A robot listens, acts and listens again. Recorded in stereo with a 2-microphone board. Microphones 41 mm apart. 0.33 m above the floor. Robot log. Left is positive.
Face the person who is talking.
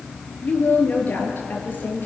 note: The woman speaking: about 45° left or 135° left.
cmd yaw +45
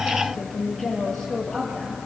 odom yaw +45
end: Found it: a woman speaking, straight ahead.